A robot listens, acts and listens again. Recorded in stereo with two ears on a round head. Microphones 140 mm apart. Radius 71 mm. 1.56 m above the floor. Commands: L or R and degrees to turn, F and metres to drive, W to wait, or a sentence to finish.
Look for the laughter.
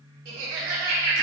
R70
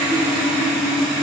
W
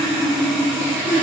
W
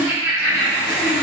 Facing the laughter, 1 to 2 m away.